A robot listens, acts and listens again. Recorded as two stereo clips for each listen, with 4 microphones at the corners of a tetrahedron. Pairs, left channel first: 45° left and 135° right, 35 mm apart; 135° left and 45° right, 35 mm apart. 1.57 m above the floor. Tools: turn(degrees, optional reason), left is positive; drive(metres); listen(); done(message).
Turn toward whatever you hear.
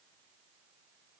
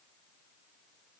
listen()
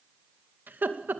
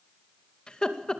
turn(degrees=-160, reason="The laughter: 160° right.")
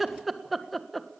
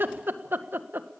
turn(degrees=-40, reason="The laughter is now 40° right.")
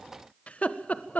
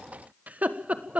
done("Found it: laughter, straight ahead, 1 to 2 m away.")